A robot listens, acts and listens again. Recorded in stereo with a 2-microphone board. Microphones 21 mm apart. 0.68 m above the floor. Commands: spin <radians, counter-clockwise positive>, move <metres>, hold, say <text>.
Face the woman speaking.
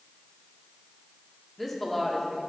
spin 0.52
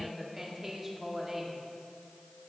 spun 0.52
spin -0.35
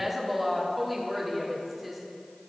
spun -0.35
say Facing the woman speaking, 1 to 2 m away.